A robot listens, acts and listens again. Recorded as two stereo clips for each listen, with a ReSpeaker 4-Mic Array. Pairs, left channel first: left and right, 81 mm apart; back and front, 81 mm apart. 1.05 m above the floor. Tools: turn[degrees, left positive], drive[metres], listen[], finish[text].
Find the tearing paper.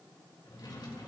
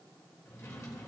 Action: listen[]
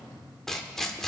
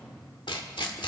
Thought: The tearing paper: 175° left.
Action: turn[175]
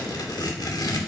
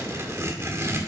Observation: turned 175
Thought: The tearing paper is now 55° left.
Action: turn[55]
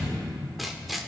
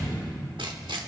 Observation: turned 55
Action: finish[Found it: tearing paper, straight ahead, 1 to 2 m away.]